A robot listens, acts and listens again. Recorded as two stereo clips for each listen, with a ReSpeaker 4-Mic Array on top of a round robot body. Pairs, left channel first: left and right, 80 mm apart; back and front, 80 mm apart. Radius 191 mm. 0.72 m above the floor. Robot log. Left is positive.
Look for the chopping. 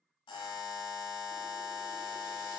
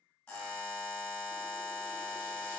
cmd idle
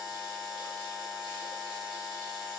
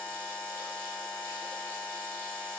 cmd idle
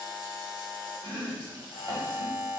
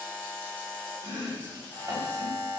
note: The chopping: 45° right.
cmd yaw -45
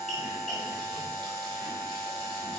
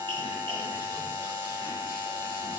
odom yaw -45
cmd idle
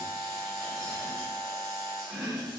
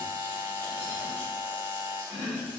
end: Found it: chopping, straight ahead, 1 to 2 m away.